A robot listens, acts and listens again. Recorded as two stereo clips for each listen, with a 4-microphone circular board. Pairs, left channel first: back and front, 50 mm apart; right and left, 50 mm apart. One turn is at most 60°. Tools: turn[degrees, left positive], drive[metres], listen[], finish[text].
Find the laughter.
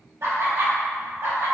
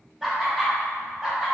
Thought: The laughter: 15° left.
Action: turn[15]
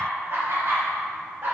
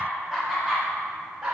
Thought: The laughter is now 25° left.
Action: turn[25]
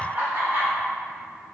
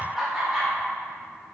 Thought: The laughter is now 15° left.
Action: turn[15]
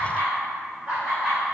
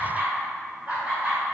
Thought: The laughter is now 55° left.
Action: turn[55]
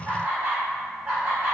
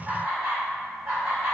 Thought: The laughter is now 30° left.
Action: turn[30]
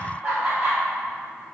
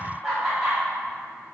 Thought: The laughter is now 10° left.
Action: turn[10]
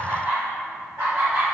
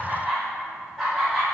Action: finish[Facing the laughter.]